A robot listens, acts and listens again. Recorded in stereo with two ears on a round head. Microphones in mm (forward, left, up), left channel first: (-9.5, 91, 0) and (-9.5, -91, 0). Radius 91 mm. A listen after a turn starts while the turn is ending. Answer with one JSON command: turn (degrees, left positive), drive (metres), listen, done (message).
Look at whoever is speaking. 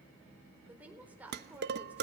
{"turn": -30}
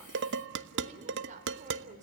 {"turn": -140}
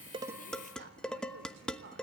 {"turn": -55}
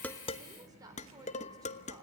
{"turn": -20}
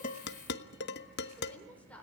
{"done": "Found it: a woman speaking, straight ahead, over 4 m away."}